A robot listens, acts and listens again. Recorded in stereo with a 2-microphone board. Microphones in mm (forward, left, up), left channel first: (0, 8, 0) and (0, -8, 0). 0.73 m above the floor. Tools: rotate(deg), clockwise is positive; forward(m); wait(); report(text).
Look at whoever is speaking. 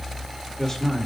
rotate(-25)
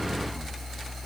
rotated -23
wait()
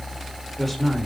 report("Facing the man speaking, 2 to 4 m away.")